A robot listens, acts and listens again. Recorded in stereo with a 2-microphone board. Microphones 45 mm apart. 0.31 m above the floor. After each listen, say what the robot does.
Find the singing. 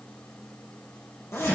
Keep listening.
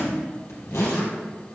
Keep listening.
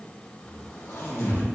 I can't make out singing to turn to.